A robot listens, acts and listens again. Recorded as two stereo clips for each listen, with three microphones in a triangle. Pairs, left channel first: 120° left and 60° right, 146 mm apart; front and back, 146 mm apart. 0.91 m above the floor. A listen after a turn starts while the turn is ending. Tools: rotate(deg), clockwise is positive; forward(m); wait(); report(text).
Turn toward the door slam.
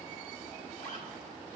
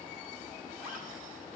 wait()
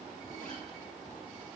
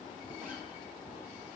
wait()
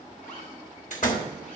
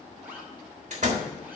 rotate(-145)
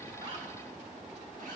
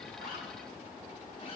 report("I heard a door slam from this way, but can't make it out now.")